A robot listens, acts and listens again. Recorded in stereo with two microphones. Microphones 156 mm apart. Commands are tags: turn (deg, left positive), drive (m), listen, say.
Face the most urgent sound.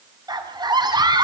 <turn deg="-25"/>
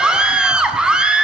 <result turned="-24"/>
<say>Facing the scream.</say>